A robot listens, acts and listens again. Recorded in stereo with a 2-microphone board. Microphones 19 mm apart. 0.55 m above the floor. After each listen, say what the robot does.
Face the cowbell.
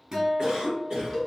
Turn 30° left.
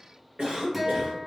Keep listening.
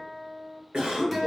Keep listening.
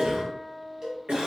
Turn 30° right.
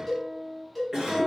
Facing the cowbell.